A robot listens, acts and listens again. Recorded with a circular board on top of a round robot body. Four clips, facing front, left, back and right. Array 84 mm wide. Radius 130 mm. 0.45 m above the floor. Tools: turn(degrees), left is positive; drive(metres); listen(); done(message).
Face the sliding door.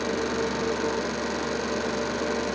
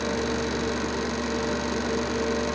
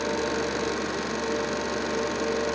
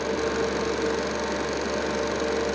listen()
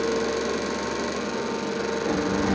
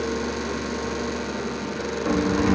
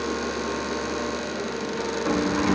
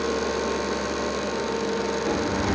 turn(degrees=135)
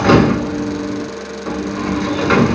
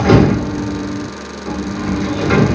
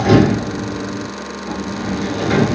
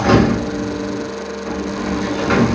turn(degrees=-10)
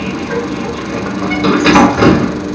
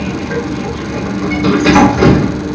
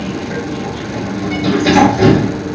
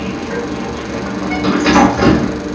done("Facing the sliding door.")